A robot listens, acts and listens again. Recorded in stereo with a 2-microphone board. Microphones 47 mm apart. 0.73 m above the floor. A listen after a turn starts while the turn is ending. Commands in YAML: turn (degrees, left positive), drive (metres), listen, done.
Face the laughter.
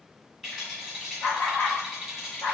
turn: 60
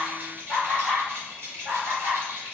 turn: -10
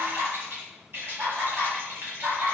turn: -15
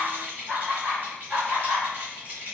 done: "Facing the laughter, 2 to 4 m away."